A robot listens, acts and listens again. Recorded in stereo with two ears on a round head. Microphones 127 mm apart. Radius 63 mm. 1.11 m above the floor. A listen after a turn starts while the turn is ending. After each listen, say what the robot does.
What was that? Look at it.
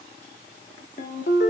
Turn 60° left.
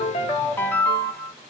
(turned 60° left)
Turn 20° left.
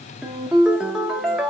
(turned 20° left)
Facing the ringtone.